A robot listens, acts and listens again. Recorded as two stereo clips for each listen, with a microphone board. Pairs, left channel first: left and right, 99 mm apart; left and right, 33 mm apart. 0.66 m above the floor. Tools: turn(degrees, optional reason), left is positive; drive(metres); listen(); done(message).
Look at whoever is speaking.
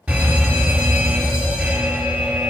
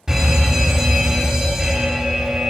listen()
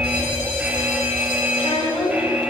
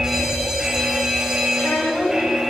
turn(degrees=75, reason="The child speaking: about 75° left or 105° left.")
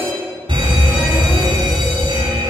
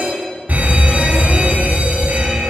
listen()
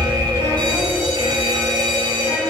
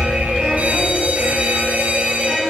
listen()
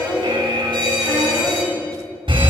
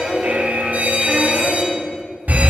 done("I heard a child speaking, but can't make it out now. It was about straight ahead or 30° left.")